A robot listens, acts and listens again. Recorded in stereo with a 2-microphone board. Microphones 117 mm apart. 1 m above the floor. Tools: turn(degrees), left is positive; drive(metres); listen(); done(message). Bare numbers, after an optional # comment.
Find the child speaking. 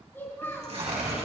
# The child speaking: about 20° left or 160° left.
turn(20)
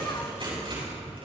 listen()
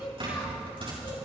# So it is at 140° left.
turn(140)
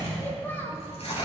# The child speaking is now 15° left.
turn(15)
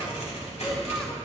listen()
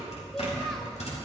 listen()
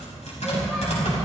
done("I heard a child speaking from this way, but can't make it out now.")